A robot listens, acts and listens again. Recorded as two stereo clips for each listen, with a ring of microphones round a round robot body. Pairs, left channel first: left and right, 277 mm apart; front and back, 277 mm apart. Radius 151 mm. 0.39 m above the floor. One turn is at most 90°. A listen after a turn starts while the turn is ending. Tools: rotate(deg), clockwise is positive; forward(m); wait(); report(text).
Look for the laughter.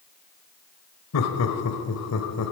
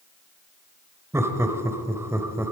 rotate(-90)
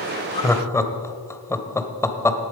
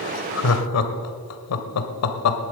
rotate(-10)
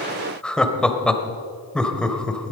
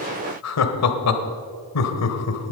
report("Found it: laughter, straight ahead.")